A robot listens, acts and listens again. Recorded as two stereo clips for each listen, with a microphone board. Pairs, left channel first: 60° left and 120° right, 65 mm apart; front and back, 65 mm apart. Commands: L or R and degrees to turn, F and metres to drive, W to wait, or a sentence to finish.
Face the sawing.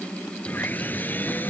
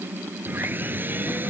L120
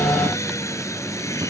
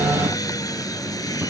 L20
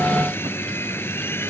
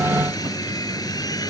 Facing the sawing.